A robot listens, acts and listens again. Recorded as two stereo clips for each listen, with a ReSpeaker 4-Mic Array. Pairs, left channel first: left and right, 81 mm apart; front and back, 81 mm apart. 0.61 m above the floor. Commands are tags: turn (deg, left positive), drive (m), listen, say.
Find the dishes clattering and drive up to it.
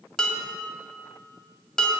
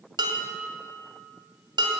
<turn deg="170"/>
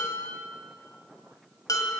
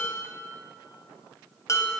<turn deg="50"/>
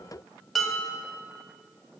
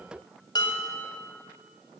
<drive m="1.0"/>
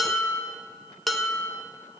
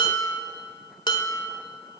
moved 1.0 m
<drive m="1.0"/>
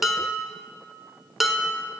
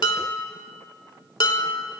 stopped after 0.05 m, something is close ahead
<say>Arrived at the dishes clattering, straight ahead.</say>